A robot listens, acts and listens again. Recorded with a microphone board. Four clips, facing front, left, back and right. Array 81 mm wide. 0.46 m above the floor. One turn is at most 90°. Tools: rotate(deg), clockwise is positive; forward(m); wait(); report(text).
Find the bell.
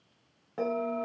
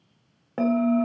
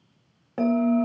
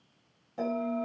rotate(-90)
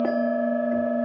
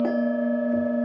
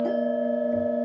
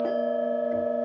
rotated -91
rotate(-15)
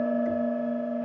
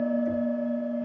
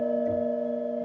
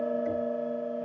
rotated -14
report("Facing the bell.")